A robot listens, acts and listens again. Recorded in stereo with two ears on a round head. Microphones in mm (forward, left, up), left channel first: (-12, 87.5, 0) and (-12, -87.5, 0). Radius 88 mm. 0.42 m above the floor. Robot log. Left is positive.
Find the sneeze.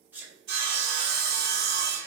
cmd yaw -30
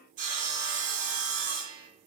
cmd idle
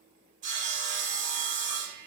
end: I heard a sneeze, but can't make it out now. It was about 20° left or 140° right.